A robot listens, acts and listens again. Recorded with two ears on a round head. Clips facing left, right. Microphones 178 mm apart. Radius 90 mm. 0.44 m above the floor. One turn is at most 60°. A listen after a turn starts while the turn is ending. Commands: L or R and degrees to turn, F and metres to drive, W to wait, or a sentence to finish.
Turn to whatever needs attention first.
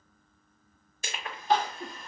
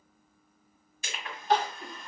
L60
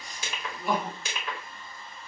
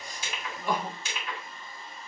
Found it: crying, straight ahead.